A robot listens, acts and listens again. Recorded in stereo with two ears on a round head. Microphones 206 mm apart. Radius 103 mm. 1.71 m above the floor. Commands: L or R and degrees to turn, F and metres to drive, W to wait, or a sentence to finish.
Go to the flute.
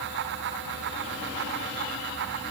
W
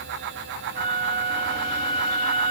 L25
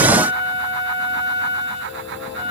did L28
L125
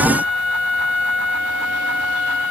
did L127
F1.0
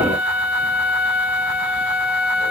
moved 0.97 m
F1.0
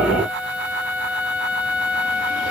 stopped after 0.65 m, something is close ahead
R10
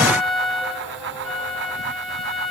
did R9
Arrived at the flute, straight ahead.